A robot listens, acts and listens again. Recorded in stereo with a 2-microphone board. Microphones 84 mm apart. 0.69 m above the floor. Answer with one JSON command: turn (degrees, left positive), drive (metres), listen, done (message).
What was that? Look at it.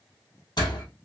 {"turn": 60}
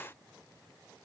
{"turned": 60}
{"listen": true}
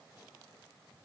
{"done": "I heard a door slam, but can't make it out now. It was about straight ahead or 60° left."}